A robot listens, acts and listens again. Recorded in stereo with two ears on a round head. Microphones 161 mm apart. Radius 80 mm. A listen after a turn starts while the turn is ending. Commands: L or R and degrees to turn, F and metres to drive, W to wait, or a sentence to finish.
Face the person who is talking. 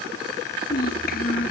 L55
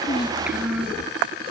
Found it: a child speaking, straight ahead.